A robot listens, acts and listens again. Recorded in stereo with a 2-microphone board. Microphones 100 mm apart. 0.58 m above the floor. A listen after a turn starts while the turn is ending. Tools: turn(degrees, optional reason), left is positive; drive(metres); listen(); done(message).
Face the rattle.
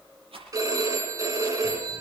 turn(degrees=-90)
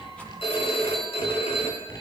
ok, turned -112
turn(degrees=20, reason="Nothing new. It was at 20° left.")
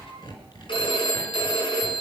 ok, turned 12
turn(degrees=10, reason="Nothing new. It was at 10° left.")
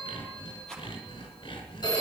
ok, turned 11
done("Facing the rattle.")